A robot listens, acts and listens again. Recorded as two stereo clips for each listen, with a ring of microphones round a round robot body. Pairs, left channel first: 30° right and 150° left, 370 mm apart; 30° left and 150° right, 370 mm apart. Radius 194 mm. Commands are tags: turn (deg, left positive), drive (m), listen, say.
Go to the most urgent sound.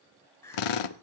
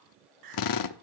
<turn deg="-115"/>
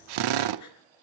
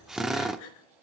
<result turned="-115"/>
<turn deg="15"/>
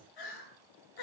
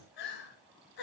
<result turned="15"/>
<drive m="1.0"/>
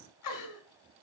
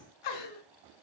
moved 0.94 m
<turn deg="10"/>
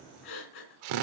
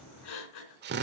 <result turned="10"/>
<drive m="1.0"/>
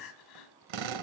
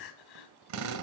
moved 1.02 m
<drive m="1.0"/>
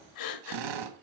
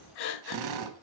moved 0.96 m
<drive m="1.0"/>
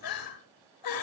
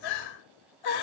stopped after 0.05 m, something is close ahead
<say>I am next to the crying.</say>